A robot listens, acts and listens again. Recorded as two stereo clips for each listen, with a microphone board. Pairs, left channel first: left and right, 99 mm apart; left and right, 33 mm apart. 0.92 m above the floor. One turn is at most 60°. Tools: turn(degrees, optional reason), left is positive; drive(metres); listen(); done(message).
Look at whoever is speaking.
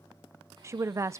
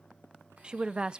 turn(degrees=-30, reason="The woman speaking: about 30° right or 150° right.")
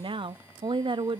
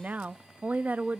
turn(degrees=-60, reason="So it is at 120° right.")
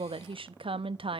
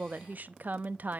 turn(degrees=-60, reason="The woman speaking is now 65° right.")
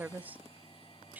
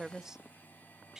turn(degrees=-20, reason="The woman speaking is now 20° right.")
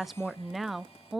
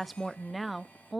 done("Facing the woman speaking, under 1 m away.")